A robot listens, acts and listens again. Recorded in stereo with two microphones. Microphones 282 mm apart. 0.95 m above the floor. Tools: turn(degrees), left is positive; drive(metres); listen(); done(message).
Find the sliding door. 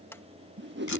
turn(degrees=30)
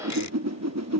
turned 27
listen()
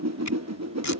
listen()
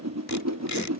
done("I heard a sliding door, but can't make it out now. It was about 20° right or 145° left.")